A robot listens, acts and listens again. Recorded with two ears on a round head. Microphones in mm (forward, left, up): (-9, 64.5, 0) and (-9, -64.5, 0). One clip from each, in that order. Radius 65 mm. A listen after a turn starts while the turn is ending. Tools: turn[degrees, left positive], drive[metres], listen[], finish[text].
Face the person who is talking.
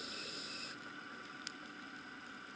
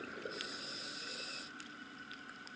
Action: listen[]
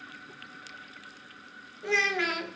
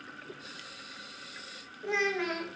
Thought: The child speaking: about 60° left or 120° left.
Action: turn[60]
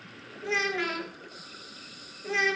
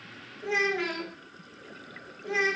Thought: So it is at 20° left.
Action: turn[20]
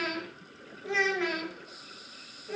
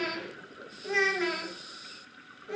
Action: finish[Facing the child speaking, 1 to 2 m away.]